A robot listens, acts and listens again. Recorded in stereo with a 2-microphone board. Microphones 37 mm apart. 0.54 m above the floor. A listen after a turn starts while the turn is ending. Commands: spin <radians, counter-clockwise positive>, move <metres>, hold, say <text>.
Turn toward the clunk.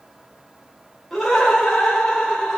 hold
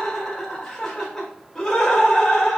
hold
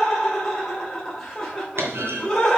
spin -1.57
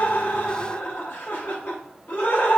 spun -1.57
say Facing where the clunk came from. I can't hear it now.